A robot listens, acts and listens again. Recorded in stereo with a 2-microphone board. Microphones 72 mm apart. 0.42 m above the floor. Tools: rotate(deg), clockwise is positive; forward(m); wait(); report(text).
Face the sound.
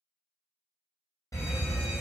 rotate(-45)
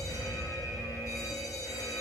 rotate(-75)
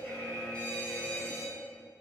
rotate(-15)
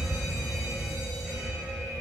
report("Facing the fire alarm, 2 to 4 m away.")